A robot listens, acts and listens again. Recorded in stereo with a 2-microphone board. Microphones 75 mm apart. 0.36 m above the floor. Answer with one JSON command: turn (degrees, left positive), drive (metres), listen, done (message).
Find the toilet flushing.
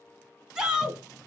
{"turn": 35}
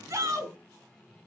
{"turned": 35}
{"done": "Found it: a toilet flushing, straight ahead, 1 to 2 m away."}